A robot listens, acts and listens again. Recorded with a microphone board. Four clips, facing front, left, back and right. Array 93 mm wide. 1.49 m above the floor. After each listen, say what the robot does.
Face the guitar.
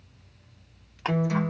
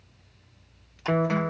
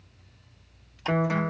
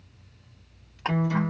Turn 120° left.
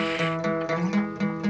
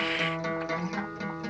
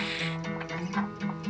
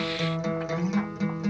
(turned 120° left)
Facing the guitar.